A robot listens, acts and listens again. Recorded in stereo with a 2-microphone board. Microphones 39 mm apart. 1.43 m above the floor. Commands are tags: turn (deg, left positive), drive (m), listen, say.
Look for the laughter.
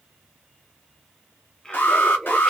<turn deg="30"/>
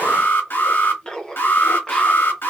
<turn deg="20"/>
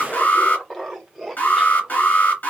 <turn deg="30"/>
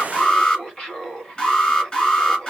<turn deg="150"/>
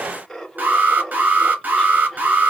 <say>Facing the laughter, 1 to 2 m away.</say>